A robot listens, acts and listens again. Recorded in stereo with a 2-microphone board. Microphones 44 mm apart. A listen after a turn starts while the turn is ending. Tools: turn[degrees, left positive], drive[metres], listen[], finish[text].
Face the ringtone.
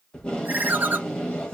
Thought: The ringtone: about 40° right or 140° right.
Action: turn[-40]
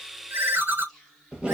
Thought: So it is at 95° right.
Action: turn[-95]
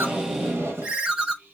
Thought: The ringtone is now 30° right.
Action: turn[-30]
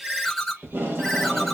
Action: finish[Facing the ringtone, under 1 m away.]